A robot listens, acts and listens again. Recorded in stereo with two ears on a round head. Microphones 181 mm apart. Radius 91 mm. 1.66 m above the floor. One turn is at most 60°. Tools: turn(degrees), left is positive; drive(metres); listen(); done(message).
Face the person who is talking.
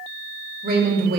turn(degrees=-50)
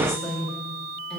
done("Facing the woman speaking, 2 to 4 m away.")